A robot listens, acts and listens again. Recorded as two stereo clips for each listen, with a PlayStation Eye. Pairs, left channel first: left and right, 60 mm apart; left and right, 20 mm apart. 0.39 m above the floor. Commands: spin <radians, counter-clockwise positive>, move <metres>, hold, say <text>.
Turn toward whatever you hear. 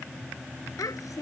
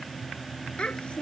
spin 1.22
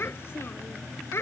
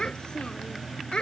spin 0.79
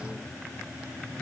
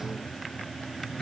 hold
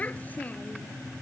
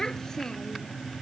spin 0.52
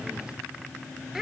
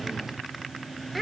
say Found it: a child speaking, straight ahead.